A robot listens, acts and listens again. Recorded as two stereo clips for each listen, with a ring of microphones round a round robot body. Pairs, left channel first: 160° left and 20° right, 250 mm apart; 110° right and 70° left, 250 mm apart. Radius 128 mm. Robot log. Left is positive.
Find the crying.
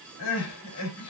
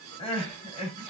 note: The crying: straight behind.
cmd yaw +180
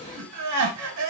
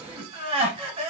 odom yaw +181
end: Found it: crying, straight ahead, 2 to 4 m away.